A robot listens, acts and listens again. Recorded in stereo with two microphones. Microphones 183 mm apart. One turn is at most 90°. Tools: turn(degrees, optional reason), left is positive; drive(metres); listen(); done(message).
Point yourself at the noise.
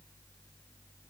listen()
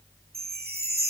turn(degrees=-60, reason="The chime: about 60° right or 120° right.")
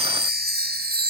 turn(degrees=-60, reason="So it is at 60° right.")
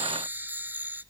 turn(degrees=-10, reason="The chime is now 10° right.")
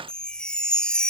done("Found it: a chime, straight ahead.")